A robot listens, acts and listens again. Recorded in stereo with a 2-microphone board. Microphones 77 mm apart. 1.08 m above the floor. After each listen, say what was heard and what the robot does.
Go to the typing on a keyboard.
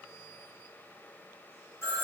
Keep listening.
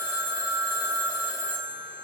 Keep listening.
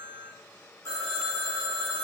I can't make out typing on a keyboard, only a phone ringing.